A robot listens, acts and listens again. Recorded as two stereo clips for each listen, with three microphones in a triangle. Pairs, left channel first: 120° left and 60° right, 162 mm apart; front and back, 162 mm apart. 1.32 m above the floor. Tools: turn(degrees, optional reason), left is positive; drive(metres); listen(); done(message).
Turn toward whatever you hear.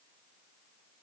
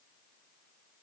listen()
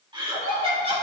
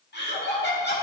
done("Facing the laughter, 2 to 4 m away.")